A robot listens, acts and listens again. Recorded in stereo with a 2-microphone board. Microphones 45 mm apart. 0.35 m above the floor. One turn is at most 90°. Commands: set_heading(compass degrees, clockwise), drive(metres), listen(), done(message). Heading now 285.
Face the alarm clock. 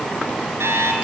set_heading(355)
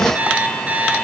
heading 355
set_heading(25)
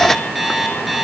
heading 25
done("Found it: an alarm clock, straight ahead, 2 to 4 m away.")